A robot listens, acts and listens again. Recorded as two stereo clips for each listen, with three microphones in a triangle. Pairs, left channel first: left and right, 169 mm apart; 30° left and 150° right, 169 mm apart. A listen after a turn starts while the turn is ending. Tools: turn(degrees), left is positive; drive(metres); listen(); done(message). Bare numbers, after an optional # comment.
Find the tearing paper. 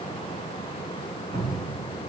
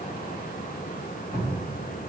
listen()
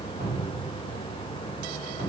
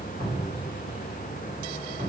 listen()
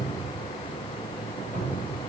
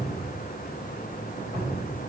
done("I can't make out tearing paper to turn to.")